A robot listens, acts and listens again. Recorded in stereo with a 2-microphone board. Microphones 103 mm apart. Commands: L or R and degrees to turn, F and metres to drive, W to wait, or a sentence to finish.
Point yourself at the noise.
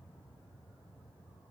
W
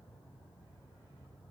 W
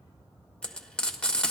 L30
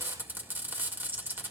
R20
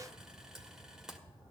Found it: frying, straight ahead.